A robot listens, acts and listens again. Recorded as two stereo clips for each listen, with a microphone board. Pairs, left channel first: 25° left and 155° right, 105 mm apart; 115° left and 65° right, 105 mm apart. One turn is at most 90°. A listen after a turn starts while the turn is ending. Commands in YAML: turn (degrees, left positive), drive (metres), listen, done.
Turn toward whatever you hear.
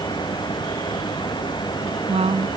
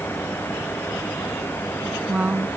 turn: -90
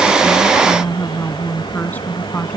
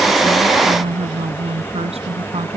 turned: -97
turn: -50
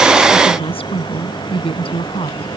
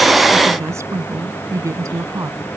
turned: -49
turn: -10
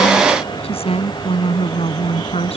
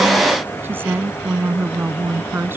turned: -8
done: "Facing the woman speaking."